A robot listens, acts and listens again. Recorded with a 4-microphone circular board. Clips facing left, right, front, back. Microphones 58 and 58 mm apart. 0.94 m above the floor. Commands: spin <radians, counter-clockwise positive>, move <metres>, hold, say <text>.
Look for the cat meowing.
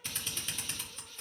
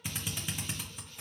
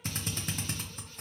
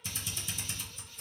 hold
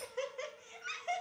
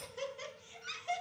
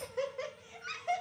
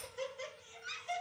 hold
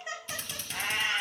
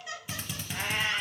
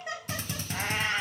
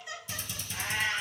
spin 0.26
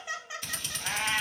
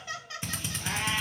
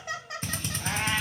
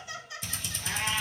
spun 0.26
spin 0.52
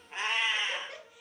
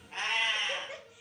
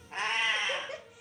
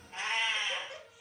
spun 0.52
spin 0.35
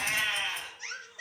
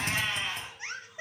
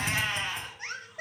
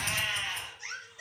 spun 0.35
spin 0.17
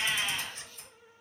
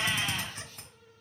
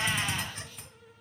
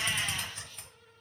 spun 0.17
hold
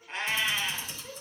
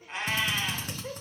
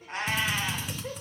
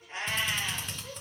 say Facing the cat meowing.